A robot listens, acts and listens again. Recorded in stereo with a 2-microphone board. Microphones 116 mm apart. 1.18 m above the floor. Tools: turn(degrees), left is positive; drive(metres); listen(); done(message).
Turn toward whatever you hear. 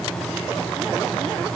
listen()
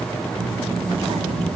turn(degrees=-65)
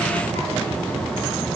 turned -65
turn(degrees=-40)
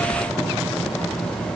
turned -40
done("Facing the child speaking, over 4 m away.")